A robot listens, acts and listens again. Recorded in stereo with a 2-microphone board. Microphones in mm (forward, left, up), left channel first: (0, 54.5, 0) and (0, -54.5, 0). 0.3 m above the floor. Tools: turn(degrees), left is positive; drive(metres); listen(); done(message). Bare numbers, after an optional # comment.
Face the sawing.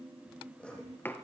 turn(30)
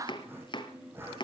# So it is at 20° right.
turn(-20)
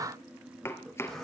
done("Found it: sawing, straight ahead.")